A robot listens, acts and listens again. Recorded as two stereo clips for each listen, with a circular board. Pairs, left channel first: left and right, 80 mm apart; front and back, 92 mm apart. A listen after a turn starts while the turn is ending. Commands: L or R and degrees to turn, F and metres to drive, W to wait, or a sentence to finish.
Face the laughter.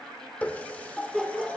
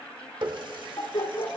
Facing the laughter.